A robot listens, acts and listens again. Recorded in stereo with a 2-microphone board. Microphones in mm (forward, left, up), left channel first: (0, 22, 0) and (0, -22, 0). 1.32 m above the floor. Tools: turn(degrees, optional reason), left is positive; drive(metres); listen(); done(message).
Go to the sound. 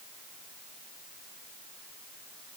listen()
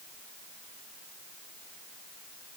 listen()
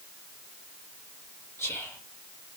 turn(degrees=90)
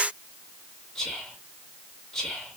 turn(degrees=10, reason="So it is at 10° left.")
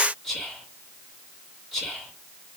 drive(metres=1.0)
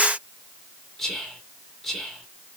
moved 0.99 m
drive(metres=1.0)
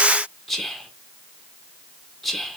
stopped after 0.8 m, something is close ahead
done("Arrived at the whispering, straight ahead.")